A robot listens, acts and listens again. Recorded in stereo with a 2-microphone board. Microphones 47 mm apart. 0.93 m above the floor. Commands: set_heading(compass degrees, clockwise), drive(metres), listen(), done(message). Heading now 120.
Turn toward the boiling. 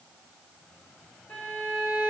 listen()
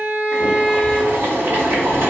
set_heading(180)
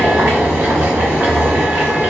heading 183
set_heading(238)
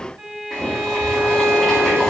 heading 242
done("Facing the boiling.")